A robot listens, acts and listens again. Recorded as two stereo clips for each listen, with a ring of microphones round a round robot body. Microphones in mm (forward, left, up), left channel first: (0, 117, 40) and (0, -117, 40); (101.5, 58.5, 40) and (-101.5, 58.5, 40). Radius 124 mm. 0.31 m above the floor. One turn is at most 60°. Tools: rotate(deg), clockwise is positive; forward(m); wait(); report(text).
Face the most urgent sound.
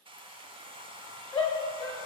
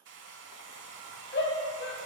rotate(-25)
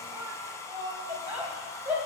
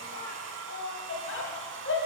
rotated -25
rotate(10)
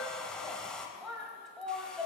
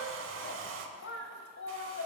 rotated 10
report("Found it: a shout, straight ahead, 1 to 2 m away.")